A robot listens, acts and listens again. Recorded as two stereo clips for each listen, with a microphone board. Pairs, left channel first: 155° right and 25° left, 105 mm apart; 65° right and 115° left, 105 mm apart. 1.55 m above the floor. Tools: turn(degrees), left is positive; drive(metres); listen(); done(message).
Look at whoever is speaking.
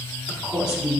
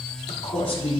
turn(degrees=-60)
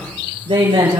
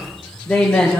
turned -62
turn(degrees=10)
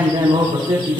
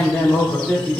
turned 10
turn(degrees=10)
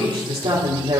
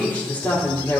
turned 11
done("Facing the woman speaking, over 4 m away.")